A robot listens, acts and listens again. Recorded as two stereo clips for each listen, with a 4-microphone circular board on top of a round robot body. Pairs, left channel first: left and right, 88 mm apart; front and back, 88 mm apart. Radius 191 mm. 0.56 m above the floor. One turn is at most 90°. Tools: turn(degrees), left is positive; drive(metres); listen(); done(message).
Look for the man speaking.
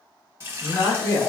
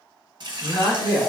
turn(degrees=40)
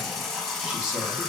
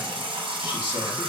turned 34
listen()
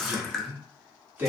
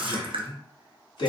turn(degrees=-25)
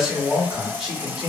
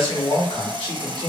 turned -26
turn(degrees=-10)
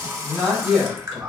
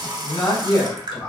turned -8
done("Facing the man speaking.")